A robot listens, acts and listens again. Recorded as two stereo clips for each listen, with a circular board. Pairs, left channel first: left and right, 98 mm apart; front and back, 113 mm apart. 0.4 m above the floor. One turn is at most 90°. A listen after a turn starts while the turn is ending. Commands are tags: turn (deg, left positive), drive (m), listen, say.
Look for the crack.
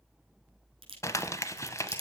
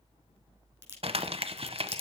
<turn deg="-90"/>
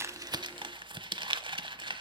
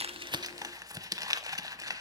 <turn deg="-25"/>
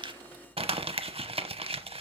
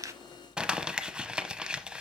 <say>I heard a crack from this way, but can't make it out now.</say>